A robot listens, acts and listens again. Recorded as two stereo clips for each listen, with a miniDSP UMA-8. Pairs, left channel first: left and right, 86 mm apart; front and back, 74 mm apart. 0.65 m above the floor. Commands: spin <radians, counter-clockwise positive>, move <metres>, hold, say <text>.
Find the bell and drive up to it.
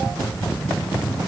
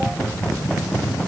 hold
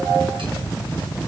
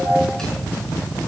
hold
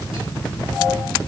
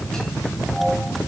say I can't make out a bell.